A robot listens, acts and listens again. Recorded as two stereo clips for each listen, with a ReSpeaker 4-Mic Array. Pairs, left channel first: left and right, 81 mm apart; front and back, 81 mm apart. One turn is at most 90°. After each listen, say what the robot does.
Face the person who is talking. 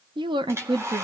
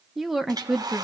Turn 90° right.
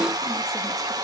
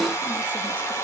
Keep listening.
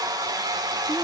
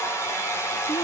Keep listening.
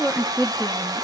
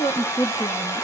Found it: a woman speaking, straight ahead.